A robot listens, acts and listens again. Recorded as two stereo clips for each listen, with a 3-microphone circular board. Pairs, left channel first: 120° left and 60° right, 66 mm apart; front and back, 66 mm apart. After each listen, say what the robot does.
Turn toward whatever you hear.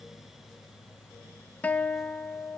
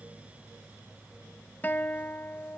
Turn 60° left.
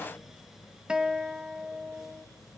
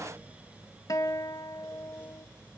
Turn 15° left.
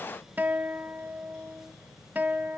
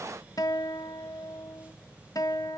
Found it: a guitar, straight ahead.